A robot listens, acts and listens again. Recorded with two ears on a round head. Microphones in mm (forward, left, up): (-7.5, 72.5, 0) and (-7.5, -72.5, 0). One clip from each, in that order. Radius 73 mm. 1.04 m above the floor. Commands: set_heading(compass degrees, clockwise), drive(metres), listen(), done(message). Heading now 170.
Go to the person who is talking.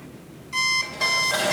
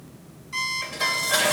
listen()
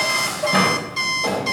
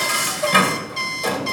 listen()
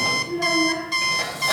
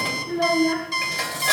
set_heading(230)
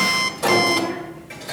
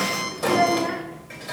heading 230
set_heading(290)
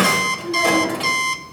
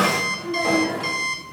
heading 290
listen()
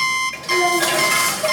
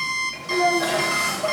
listen()
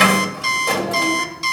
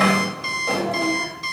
done("Facing where the child speaking came from. I can't hear it now. I did not reach it.")